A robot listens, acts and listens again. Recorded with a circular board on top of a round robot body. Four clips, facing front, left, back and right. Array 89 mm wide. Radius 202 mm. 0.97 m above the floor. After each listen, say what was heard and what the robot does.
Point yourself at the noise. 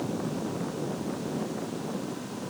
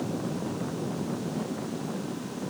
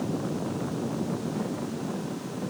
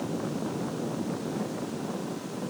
Keep listening.
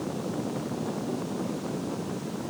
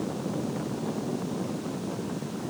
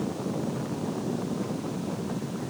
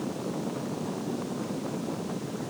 Keep listening.
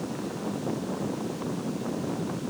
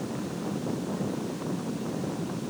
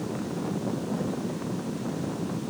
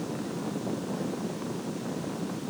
I can't make out anything.